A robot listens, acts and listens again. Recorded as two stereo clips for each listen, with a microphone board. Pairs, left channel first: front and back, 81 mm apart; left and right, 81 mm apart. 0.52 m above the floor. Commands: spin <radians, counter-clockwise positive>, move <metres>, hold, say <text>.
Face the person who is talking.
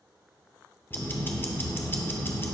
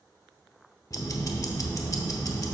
hold
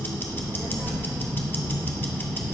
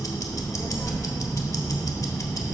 spin 2.18
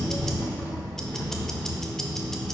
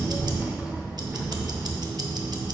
spin -0.26
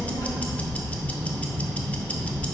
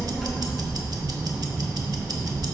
say Facing the child speaking, 1 to 2 m away.